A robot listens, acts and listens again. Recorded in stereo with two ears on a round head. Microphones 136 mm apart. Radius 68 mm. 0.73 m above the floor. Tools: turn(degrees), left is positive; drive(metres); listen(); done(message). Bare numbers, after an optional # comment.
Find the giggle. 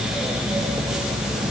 listen()
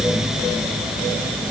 listen()
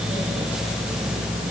done("I can't make out a giggle.")